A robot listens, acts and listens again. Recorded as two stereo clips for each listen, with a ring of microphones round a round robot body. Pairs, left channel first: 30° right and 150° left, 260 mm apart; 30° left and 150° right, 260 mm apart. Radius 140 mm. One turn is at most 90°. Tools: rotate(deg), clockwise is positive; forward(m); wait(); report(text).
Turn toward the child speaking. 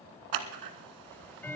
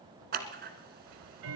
wait()
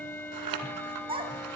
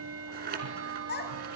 rotate(-80)
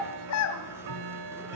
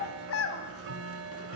report("Facing the child speaking, 2 to 4 m away.")